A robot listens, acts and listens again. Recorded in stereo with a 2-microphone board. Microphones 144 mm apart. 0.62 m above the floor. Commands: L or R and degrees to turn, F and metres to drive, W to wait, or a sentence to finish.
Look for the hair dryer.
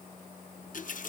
W
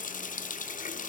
W
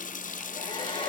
L40
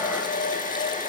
L100
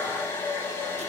L15
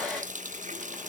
Facing the hair dryer, over 4 m away.